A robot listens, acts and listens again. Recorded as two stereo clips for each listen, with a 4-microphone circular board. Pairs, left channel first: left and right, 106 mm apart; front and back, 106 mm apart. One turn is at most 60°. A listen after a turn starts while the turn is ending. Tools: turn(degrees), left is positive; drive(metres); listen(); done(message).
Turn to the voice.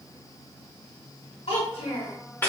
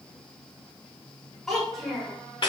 turn(degrees=60)
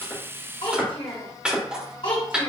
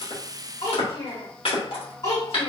turn(degrees=55)
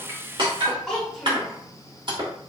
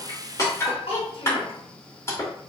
done("Facing the child speaking.")